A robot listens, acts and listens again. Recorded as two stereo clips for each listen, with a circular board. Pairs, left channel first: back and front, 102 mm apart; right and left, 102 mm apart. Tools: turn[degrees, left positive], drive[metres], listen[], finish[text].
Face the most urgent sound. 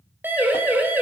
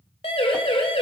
Thought: The siren: 70° right.
Action: turn[-70]
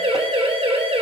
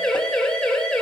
Thought: The siren is now 10° right.
Action: turn[-10]
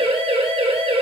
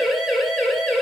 Action: finish[Found it: a siren, straight ahead, 2 to 4 m away.]